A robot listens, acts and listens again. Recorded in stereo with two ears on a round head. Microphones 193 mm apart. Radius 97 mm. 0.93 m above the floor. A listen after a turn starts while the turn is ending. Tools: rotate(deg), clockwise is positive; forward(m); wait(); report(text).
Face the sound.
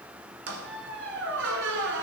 rotate(60)
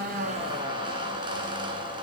rotate(25)
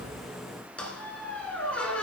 report("Facing the squeak.")